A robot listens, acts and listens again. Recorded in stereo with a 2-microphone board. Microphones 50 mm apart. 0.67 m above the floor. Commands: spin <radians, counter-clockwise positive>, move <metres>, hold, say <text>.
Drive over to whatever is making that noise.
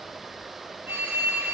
spin -0.70
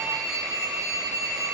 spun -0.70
spin -1.66
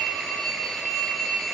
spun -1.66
move 1.0
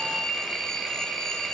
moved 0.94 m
spin 0.17
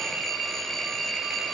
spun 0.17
move 1.0
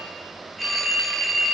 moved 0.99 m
move 1.0
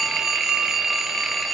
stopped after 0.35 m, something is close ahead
say I am next to the phone ringing.